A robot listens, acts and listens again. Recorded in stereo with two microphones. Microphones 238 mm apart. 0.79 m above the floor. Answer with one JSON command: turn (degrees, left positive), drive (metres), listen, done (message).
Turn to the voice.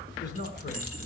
{"turn": 50}
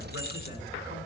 {"listen": true}
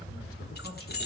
{"listen": true}
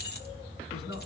{"turn": 80}
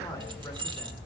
{"listen": true}
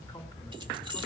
{"listen": true}
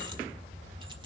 {"done": "I heard a man speaking from this way, but can't make it out now."}